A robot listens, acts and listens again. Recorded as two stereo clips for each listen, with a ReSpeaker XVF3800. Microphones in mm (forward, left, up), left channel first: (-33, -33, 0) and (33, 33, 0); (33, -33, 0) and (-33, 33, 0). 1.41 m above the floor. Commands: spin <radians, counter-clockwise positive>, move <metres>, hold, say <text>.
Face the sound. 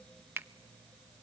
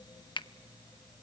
spin -0.35
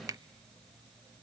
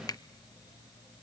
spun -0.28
say Facing the finger snap.